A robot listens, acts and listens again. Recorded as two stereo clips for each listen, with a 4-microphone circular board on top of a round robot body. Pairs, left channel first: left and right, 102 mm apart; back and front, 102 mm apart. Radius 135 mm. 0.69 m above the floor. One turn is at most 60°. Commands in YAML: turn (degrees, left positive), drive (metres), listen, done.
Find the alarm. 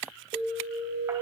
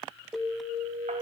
turn: -60
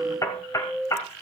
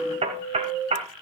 turn: -10
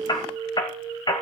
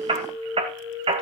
done: "Facing the alarm."